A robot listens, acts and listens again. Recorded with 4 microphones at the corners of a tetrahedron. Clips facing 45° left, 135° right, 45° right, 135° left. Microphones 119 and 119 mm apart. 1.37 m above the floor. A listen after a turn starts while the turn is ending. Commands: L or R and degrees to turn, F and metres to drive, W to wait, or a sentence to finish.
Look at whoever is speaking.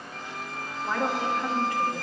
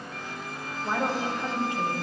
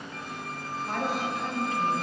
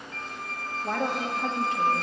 L155
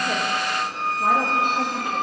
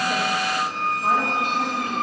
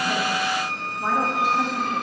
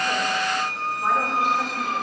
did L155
W
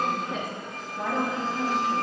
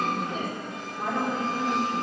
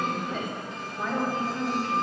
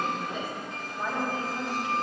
L55
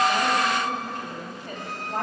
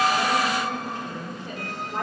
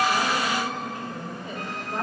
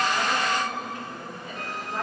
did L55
Found it: a woman speaking, straight ahead, 2 to 4 m away.